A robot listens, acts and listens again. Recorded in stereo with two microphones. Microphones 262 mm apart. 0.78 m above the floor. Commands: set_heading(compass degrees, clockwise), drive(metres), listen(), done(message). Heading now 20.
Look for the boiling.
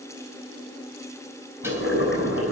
set_heading(330)
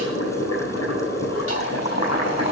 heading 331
set_heading(256)
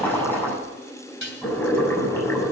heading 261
done("Found it: boiling, straight ahead.")